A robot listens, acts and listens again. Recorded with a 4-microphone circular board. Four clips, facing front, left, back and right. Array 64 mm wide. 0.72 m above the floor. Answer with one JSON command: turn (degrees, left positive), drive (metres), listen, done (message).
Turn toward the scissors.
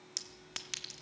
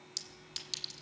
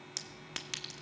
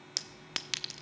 {"listen": true}
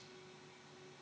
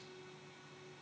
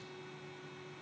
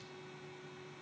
{"listen": true}
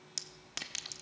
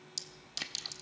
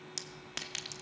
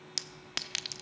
{"turn": 75}
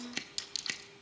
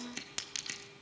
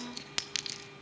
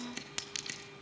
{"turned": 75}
{"done": "Found it: scissors, straight ahead, 1 to 2 m away."}